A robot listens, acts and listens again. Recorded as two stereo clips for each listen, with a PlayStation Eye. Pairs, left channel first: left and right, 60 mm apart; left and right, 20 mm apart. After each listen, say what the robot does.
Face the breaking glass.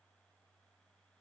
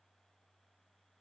Keep listening.
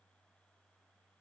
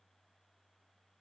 Keep listening.
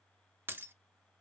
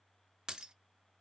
Turn 35° right.
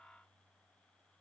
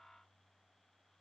Keep listening.
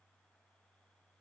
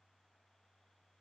I heard breaking glass, but can't make it out now. It was about straight ahead or 110° right.